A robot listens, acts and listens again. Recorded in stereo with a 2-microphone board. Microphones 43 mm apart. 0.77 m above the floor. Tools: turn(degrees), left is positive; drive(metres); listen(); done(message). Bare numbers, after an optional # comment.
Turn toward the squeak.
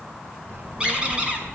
# The squeak: about 25° right or 155° right.
turn(-25)
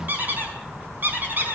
# So it is at 130° right.
turn(-130)
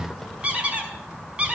# The squeak is now 30° right.
turn(-30)
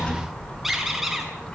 listen()
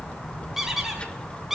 # The squeak is now 10° right.
turn(-10)
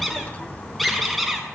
done("Found it: a squeak, straight ahead, over 4 m away.")